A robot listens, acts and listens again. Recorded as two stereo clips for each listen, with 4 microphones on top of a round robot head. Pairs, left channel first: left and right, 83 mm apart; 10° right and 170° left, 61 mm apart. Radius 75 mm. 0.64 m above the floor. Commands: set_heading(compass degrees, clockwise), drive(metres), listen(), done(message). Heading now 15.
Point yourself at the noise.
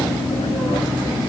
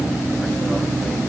listen()
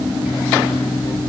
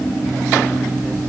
listen()
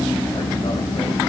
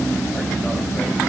done("I can't make out anything.")